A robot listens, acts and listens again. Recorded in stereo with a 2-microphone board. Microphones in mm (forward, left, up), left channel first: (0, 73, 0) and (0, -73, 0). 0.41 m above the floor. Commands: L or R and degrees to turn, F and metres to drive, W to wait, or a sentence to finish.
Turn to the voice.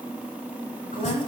L75
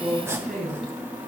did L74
Facing the woman speaking, over 4 m away.